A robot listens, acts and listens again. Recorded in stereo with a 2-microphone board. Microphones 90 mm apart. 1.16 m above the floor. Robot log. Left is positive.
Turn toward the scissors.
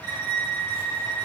cmd idle
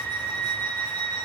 cmd idle
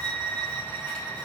end: I can't make out scissors to turn to.